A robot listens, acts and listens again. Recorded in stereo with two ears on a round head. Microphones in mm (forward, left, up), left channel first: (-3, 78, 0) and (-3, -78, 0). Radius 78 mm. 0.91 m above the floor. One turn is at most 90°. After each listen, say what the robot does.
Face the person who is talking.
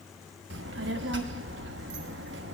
Turn 75° right.
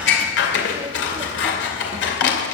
Turn 30° right.
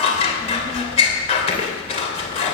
Found it: a child speaking, straight ahead, 1 to 2 m away.